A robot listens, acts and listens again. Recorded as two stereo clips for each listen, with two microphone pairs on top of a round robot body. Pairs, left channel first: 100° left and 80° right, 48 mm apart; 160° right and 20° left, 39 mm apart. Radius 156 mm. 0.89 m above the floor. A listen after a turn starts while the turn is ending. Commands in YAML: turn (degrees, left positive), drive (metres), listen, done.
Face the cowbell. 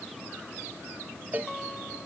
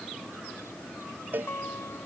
turn: -25
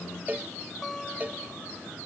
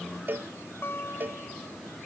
turn: -20
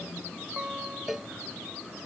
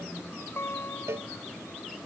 done: "Found it: a cowbell, straight ahead."